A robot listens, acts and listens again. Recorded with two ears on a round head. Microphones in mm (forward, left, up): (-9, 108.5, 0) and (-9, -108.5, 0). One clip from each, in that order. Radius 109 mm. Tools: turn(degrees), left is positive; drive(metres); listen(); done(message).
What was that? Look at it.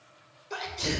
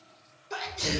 turn(degrees=-30)
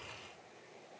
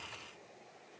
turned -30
listen()
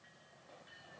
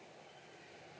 done("I heard a sneeze, but can't make it out now. It was about 25° left or 145° right.")